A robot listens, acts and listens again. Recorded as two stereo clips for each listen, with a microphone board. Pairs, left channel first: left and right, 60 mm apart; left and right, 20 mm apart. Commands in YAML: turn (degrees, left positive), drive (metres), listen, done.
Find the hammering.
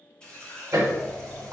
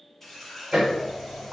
turn: -70
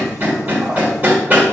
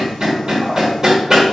turn: -30
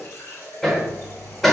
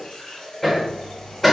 done: "Facing the hammering, 1 to 2 m away."